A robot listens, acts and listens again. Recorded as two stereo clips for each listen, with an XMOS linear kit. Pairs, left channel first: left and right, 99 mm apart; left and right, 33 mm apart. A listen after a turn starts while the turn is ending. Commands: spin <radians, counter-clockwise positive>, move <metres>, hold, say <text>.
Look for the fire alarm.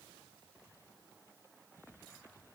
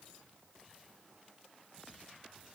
hold
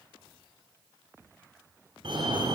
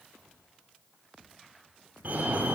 spin -0.96
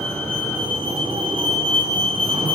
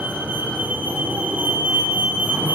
spin -1.13
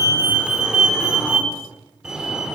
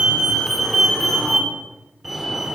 say Facing the fire alarm, over 4 m away.